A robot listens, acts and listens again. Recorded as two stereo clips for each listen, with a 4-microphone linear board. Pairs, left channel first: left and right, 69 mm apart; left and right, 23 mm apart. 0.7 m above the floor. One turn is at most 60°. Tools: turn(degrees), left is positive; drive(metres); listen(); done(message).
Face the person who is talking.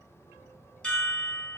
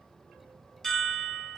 listen()
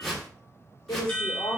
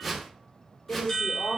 turn(degrees=60)
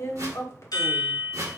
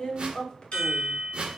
turn(degrees=45)
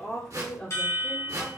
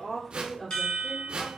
turn(degrees=20)
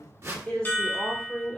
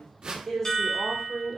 turn(degrees=15)
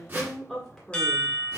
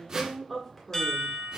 done("Found it: a woman speaking, straight ahead, 1 to 2 m away.")